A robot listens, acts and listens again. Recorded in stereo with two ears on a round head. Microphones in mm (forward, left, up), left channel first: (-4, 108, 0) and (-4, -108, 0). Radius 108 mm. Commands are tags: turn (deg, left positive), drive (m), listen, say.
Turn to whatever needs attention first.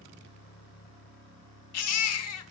<turn deg="70"/>
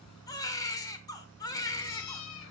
<turn deg="15"/>
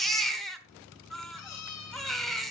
<say>Facing the baby crying, 1 to 2 m away.</say>